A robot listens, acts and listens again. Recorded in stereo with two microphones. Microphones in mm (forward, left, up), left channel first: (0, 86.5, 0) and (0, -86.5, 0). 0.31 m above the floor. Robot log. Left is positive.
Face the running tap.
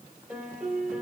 cmd idle
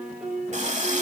note: The running tap: about 45° right or 135° right.
cmd yaw -45
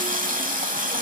note: So it is at 75° right.
cmd yaw -75
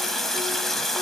end: Found it: a running tap, straight ahead.